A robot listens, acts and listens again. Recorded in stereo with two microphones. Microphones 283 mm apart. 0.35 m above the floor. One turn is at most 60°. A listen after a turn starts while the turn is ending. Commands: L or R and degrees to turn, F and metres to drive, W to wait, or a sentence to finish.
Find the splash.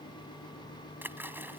R30
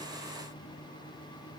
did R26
W
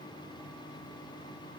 I heard a splash, but can't make it out now. It was about 20° left or 145° right.